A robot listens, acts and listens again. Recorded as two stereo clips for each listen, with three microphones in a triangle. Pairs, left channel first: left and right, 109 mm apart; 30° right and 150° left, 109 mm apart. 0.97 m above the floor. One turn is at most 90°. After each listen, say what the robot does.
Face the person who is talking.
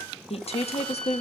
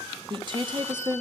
Turn 90° left.
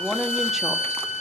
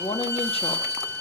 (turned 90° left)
Found it: a woman speaking, straight ahead.